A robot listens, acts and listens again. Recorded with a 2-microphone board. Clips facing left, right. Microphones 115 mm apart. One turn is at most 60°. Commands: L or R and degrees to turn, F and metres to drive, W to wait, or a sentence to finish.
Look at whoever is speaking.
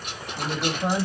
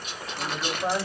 L30
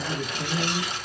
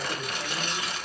L60
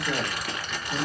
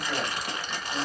L60
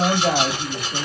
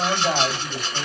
L60
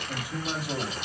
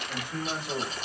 L10
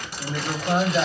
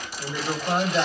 Found it: a man speaking, straight ahead.